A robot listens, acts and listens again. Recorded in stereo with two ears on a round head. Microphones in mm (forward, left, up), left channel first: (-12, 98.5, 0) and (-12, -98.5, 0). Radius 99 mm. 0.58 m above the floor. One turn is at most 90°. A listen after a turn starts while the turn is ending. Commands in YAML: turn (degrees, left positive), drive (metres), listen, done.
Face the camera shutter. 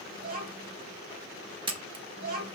turn: -25
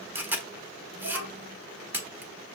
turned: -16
turn: -10
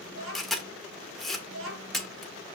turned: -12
done: "Found it: a camera shutter, straight ahead."